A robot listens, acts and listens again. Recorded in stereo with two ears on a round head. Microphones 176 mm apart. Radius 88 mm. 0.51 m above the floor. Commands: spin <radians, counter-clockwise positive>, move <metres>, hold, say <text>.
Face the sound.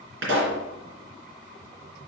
spin -1.22
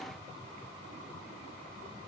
hold
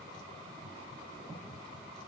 say I heard a pop, but can't make it out now. It was about straight ahead or 40° right.